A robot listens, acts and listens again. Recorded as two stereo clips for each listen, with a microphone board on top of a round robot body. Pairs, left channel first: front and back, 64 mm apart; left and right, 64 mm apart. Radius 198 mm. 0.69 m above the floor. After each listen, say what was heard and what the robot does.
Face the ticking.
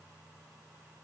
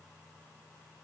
Keep listening.
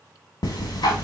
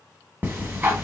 The ticking: 20° right. Turn 20° right.
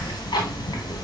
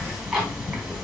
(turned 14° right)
Found it: ticking, straight ahead.